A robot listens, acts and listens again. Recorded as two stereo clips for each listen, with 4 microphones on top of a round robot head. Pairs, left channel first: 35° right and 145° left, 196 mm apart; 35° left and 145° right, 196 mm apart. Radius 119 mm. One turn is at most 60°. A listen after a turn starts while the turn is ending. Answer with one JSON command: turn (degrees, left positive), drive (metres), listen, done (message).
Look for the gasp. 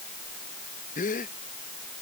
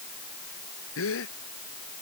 {"turn": 20}
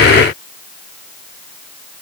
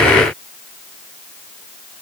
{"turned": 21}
{"done": "I heard a gasp from this way, but can't make it out now."}